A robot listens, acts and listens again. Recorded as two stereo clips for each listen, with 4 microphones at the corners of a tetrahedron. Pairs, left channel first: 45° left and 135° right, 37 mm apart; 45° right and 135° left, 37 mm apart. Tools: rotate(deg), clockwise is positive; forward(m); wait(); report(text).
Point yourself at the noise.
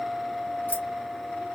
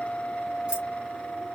wait()
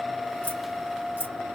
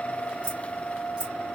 rotate(-75)
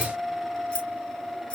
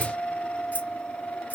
rotate(10)
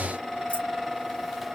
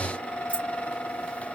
wait()
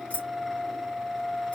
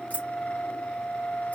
report("Found it: keys jangling, straight ahead.")